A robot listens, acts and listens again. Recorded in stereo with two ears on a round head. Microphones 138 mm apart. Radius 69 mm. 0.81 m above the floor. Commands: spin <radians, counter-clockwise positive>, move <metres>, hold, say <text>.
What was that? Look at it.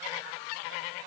hold
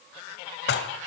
spin 1.57
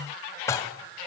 spin 0.26
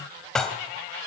say Facing the dishes clattering.